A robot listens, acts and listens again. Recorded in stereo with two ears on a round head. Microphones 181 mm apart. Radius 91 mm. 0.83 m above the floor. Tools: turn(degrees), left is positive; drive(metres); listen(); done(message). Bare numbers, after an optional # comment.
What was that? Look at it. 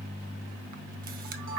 # The camera shutter: about 45° right or 135° right.
turn(-45)
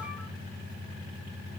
listen()
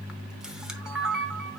done("Facing the camera shutter.")